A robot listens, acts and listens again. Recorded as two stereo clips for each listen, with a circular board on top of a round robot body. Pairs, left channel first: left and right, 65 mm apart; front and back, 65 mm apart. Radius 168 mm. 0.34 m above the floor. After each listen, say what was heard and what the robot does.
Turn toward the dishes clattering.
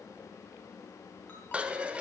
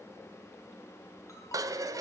The dishes clattering: 160° right. Turn 160° right.
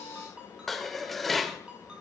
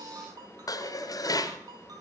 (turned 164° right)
Found it: dishes clattering, straight ahead, 1 to 2 m away.